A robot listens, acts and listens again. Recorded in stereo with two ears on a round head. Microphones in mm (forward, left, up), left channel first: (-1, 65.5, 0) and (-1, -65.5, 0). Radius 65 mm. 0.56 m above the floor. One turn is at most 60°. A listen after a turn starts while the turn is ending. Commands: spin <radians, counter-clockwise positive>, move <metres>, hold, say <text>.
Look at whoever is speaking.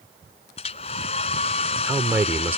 spin -0.26
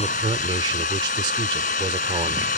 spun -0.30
spin -1.05
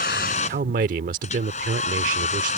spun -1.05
spin -1.05
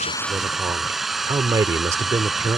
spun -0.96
spin -0.44
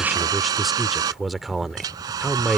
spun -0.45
say Facing the man speaking.